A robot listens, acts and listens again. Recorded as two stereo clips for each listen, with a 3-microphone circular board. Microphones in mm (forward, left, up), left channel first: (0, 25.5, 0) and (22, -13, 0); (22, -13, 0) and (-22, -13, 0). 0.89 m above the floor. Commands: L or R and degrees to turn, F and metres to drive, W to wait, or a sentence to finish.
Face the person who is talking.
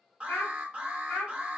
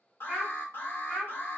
L90
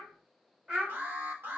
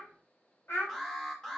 L10
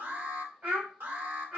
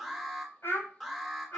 Facing the child speaking, over 4 m away.